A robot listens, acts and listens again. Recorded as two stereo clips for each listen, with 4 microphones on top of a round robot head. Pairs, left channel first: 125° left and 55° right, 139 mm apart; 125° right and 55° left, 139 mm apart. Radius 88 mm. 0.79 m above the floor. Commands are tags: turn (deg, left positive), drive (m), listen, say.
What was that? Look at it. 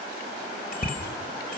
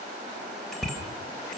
<turn deg="145"/>
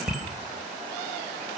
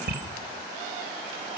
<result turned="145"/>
<turn deg="35"/>
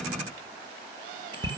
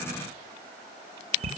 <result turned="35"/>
<say>Found it: a bicycle bell, straight ahead, 2 to 4 m away.</say>